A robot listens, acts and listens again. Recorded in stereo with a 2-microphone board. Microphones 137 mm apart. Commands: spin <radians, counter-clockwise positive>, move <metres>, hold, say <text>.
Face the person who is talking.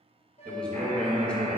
spin 0.52
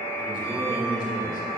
spin 2.44
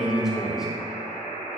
say Found it: a man speaking, straight ahead.